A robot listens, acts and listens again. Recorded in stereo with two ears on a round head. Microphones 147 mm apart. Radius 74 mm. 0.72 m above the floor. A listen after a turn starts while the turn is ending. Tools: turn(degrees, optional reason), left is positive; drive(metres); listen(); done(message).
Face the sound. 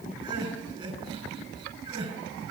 turn(degrees=-30, reason="The crying: about 30° right or 150° right.")
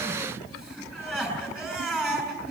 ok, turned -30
done("Facing the crying, over 4 m away.")